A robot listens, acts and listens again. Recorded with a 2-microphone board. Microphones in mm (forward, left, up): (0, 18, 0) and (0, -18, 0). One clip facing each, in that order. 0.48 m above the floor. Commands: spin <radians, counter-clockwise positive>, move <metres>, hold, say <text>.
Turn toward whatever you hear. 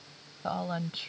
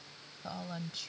spin 0.61
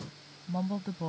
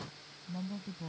spin 2.18
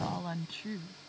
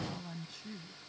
spin 0.96
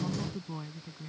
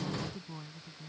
spin 0.26
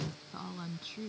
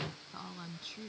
say Found it: a woman speaking, straight ahead.